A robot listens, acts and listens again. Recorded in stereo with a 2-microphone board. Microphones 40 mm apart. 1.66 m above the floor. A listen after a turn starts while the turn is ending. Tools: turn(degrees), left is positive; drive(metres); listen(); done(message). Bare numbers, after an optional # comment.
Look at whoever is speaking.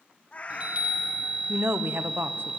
# The woman speaking: about 65° right or 115° right.
turn(-65)
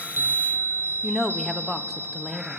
done("Found it: a woman speaking, straight ahead, 1 to 2 m away.")